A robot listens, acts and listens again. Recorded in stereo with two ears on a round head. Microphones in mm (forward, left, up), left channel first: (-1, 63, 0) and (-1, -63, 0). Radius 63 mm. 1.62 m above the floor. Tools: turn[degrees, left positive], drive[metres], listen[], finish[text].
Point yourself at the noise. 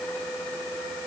Action: listen[]
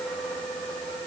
Action: listen[]
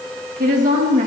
Thought: The woman speaking: about 55° right or 125° right.
Action: turn[-55]
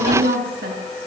Thought: So it is at 80° right.
Action: turn[-80]
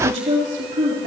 Thought: The woman speaking is now 50° right.
Action: turn[-50]
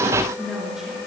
Action: finish[Facing the woman speaking, over 4 m away.]